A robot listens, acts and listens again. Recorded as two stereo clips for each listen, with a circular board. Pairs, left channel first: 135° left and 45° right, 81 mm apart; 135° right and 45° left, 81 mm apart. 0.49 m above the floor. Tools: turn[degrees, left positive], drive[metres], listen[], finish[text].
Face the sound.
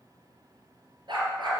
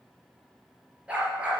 Thought: The dog barking: 30° right.
Action: turn[-30]
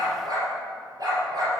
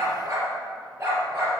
Thought: The dog barking is now 10° right.
Action: turn[-10]
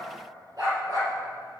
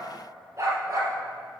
Action: finish[Found it: a dog barking, straight ahead, over 4 m away.]